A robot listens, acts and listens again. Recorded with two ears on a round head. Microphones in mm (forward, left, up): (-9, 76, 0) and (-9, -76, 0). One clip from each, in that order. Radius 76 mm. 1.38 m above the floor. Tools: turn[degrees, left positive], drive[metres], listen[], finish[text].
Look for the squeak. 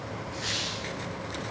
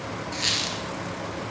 Thought: The squeak: about 65° right or 115° right.
Action: turn[-65]
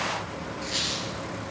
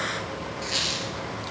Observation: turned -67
Thought: So it is at 10° right.
Action: turn[-10]
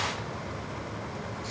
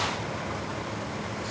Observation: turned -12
Action: listen[]
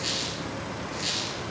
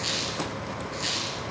Action: finish[Found it: a squeak, straight ahead, 2 to 4 m away.]